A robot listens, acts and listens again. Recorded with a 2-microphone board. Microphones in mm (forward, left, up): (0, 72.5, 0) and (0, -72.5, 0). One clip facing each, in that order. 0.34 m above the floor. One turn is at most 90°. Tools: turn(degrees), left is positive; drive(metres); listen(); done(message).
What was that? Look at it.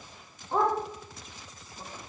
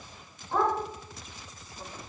turn(degrees=15)
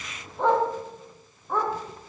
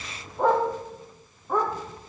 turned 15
turn(degrees=-10)
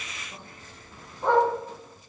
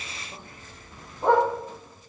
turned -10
turn(degrees=-15)
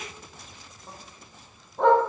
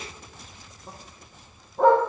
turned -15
done("Facing the dog barking, over 4 m away.")